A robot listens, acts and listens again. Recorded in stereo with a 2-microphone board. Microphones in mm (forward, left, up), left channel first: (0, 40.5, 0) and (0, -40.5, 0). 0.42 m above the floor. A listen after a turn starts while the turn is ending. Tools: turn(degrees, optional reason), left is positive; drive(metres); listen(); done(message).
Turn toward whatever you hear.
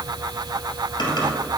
turn(degrees=65, reason="The typing on a keyboard: about 65° left or 115° left.")
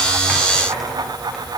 listen()
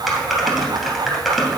done("Facing the typing on a keyboard.")